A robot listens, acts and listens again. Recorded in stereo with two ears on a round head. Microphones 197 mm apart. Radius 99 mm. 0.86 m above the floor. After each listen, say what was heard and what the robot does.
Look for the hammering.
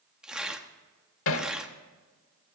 The hammering: about 65° left or 115° left. Turn 65° left.
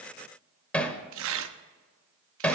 Facing the hammering, 1 to 2 m away.